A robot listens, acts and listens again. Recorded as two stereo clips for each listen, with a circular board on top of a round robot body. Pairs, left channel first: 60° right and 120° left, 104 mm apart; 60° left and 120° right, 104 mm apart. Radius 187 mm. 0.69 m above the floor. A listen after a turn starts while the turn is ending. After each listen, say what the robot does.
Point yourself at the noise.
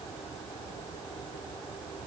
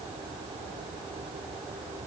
Keep listening.
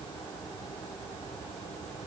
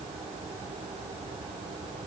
Keep listening.
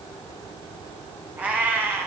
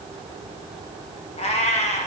Turn 50° left.
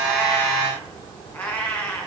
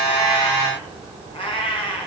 Turn 20° left.
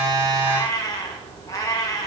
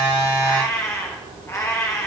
Found it: a cat meowing, straight ahead.